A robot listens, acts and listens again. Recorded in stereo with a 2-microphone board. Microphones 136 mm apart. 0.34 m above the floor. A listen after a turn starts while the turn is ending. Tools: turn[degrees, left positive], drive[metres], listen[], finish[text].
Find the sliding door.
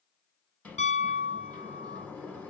Action: turn[30]
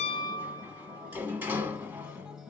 Thought: So it is at 15° right.
Action: turn[-15]
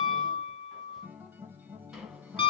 Action: listen[]
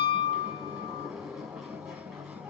Action: finish[Facing the sliding door, under 1 m away.]